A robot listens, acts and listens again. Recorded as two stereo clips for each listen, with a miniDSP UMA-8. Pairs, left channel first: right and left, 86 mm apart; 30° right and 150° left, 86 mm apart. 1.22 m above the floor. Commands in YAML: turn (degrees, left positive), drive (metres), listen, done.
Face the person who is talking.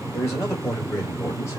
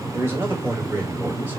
turn: -145
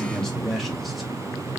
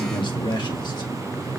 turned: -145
done: "Facing the man speaking, 1 to 2 m away."